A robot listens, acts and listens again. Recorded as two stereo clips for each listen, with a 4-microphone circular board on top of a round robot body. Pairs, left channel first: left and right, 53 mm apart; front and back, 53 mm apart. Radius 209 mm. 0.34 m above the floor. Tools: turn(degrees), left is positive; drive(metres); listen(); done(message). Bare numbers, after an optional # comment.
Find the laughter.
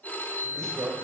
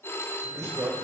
# The laughter: 165° right.
turn(-165)
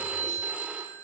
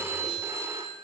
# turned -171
# Nothing new. It was at 10° left.
turn(10)
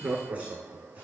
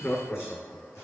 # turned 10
# The laughter is now 75° right.
turn(-75)
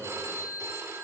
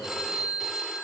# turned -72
listen()
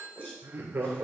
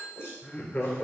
# The laughter is now 50° right.
turn(-50)
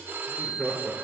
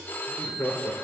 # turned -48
done("Found it: laughter, straight ahead.")